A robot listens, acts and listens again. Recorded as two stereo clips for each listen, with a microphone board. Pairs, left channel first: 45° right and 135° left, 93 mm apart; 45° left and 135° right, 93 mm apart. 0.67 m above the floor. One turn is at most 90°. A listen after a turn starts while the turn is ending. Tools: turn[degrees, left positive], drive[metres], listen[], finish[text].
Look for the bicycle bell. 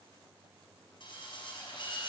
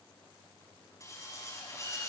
Action: listen[]
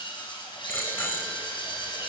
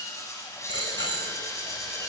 Thought: The bicycle bell: 20° left.
Action: turn[20]
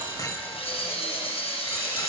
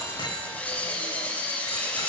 Action: finish[Facing the bicycle bell.]